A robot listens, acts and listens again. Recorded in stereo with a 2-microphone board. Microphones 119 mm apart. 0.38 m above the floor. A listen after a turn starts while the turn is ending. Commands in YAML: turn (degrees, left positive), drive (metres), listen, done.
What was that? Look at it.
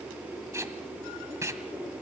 turn: -25
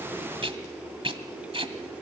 turn: -130
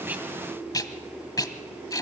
turn: 30
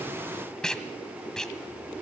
done: "Facing the tape being pulled, 1 to 2 m away."